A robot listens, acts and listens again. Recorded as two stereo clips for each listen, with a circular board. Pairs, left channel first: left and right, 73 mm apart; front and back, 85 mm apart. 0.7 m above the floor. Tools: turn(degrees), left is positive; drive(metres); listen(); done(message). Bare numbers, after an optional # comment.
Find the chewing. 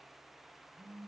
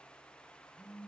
listen()
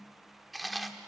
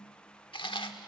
done("Facing the chewing, 1 to 2 m away.")